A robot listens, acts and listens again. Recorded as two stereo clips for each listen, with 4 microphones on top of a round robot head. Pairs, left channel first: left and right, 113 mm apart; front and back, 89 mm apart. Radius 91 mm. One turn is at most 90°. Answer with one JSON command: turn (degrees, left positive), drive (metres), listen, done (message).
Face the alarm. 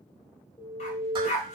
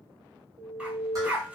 {"turn": 90}
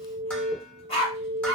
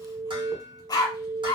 {"turn": 90}
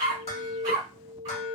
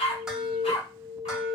{"turn": 45}
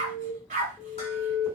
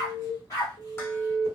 {"turn": 10}
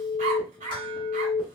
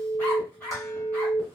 {"done": "Facing the alarm, 1 to 2 m away."}